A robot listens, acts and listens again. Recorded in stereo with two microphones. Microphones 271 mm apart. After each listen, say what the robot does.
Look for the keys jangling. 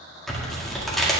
Keep listening.
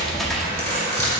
Turn 40° right.
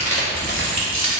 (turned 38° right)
Turn 95° right.
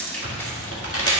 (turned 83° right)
Turn 15° left.
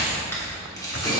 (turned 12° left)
Turn 20° left.
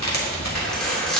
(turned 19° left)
Found it: keys jangling, straight ahead.